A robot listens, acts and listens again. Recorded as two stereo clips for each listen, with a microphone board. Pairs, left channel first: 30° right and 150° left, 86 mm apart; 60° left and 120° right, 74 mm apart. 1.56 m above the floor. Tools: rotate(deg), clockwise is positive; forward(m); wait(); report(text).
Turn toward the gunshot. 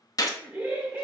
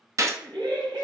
rotate(75)
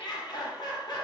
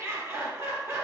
report("Facing where the gunshot came from. I can't hear it now.")